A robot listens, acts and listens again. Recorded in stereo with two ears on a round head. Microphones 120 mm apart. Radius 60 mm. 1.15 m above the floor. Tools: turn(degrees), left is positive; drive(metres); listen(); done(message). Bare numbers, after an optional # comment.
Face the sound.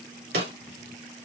turn(-90)
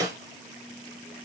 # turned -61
# So it is at 30° right.
turn(-30)
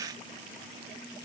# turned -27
listen()
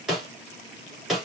done("Found it: a snare drum, straight ahead.")